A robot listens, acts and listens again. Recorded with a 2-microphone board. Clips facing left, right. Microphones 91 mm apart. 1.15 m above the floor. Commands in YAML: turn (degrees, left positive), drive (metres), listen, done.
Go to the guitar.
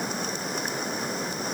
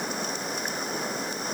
listen: true
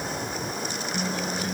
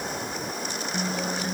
turn: -25
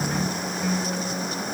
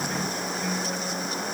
drive: 1.0
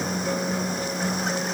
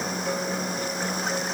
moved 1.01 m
drive: 1.0
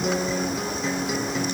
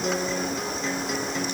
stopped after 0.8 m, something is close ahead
done: "Arrived at the guitar, straight ahead."